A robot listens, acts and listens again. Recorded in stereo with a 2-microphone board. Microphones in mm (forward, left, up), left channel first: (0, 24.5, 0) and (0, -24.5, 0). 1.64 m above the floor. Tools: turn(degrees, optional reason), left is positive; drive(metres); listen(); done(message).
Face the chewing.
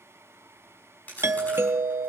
turn(degrees=35, reason="The chewing: about 35° left or 145° left.")
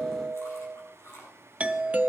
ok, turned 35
turn(degrees=110, reason="So it is at 110° left.")
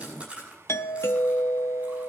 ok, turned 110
turn(degrees=-25, reason="The chewing is now 25° right.")
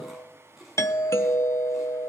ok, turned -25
done("Facing the chewing, over 4 m away.")